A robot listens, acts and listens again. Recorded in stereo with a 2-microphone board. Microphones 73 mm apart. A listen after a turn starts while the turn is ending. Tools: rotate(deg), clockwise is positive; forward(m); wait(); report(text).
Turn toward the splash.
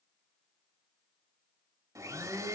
wait()
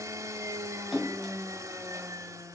rotate(-30)
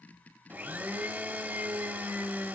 wait()
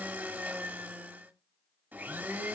report("I heard a splash, but can't make it out now. It was about 30° right or 150° left.")